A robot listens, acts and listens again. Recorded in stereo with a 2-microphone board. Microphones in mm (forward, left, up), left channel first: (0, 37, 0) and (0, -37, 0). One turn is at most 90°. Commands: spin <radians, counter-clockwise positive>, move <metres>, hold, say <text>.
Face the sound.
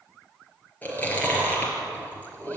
spin 0.44
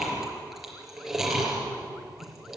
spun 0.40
say Found it: chewing, straight ahead, over 4 m away.